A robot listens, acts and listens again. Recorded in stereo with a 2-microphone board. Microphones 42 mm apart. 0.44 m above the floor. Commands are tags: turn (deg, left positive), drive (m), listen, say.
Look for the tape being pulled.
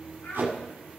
<turn deg="-70"/>
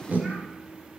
<turn deg="-45"/>
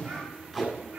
<say>Found it: tape being pulled, straight ahead.</say>